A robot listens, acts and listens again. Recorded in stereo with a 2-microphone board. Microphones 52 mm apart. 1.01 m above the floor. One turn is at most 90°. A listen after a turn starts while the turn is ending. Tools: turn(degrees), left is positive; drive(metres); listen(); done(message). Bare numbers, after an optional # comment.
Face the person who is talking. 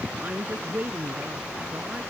# The woman speaking: about 30° right or 150° right.
turn(-30)
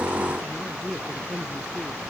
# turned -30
done("Found it: a woman speaking, straight ahead.")